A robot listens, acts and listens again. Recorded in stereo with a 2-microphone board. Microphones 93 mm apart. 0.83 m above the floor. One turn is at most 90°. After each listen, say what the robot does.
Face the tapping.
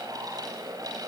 Keep listening.
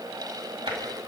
Turn 70° right.
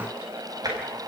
Turn 45° right.
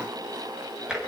Turn 10° right.
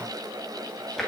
Found it: tapping, straight ahead.